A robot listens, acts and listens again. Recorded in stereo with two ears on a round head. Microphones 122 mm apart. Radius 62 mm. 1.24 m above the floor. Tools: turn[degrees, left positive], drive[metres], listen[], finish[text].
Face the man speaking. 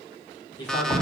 Thought: The man speaking: about 35° left or 145° left.
Action: turn[35]
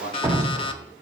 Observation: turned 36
Thought: So it is at 115° left.
Action: turn[115]
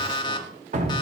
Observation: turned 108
Action: listen[]
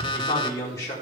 Thought: The man speaking is now 25° left.
Action: turn[25]
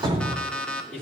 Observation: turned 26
Action: finish[Found it: a man speaking, straight ahead.]